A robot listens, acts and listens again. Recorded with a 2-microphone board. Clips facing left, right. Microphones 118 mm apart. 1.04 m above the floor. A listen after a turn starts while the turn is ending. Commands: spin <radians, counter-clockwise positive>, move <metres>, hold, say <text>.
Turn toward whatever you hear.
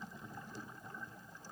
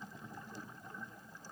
hold
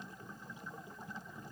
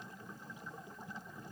hold
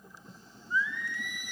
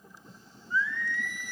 spin 0.26
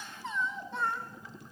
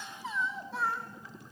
say Facing the singing, over 4 m away.